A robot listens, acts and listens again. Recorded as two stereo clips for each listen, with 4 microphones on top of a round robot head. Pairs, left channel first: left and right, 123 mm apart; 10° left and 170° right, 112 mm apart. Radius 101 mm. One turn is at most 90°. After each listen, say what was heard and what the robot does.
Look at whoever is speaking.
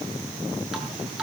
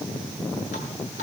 Keep listening.
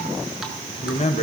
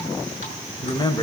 The man speaking: 60° left. Turn 60° left.
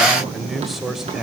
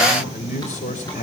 Found it: a man speaking, straight ahead, 2 to 4 m away.